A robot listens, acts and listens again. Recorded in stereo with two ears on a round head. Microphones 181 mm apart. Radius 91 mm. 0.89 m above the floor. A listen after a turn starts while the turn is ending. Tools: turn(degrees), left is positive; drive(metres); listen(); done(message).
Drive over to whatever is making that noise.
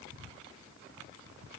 listen()
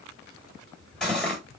turn(degrees=30)
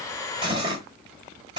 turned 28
turn(degrees=-25)
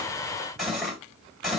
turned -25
drive(metres=1.0)
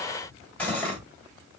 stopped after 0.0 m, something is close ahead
turn(degrees=10)
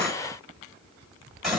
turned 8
done("Blocked. The cutlery clinking is further on, straight ahead.")